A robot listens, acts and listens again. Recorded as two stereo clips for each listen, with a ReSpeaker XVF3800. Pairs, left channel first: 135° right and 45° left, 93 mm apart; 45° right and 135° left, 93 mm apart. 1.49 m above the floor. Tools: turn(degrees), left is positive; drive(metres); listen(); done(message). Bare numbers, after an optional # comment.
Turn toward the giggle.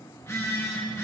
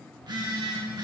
listen()
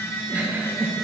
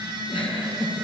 # The giggle: 25° right.
turn(-25)
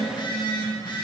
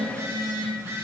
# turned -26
listen()
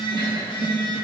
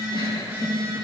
listen()
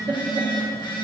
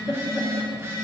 done("Found it: a giggle, straight ahead, 1 to 2 m away.")